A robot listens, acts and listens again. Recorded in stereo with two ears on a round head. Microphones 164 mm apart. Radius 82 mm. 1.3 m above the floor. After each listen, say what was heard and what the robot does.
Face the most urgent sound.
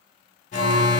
The alarm: about 40° left or 140° left. Turn 40° left.
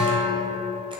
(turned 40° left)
Found it: an alarm, straight ahead, 1 to 2 m away.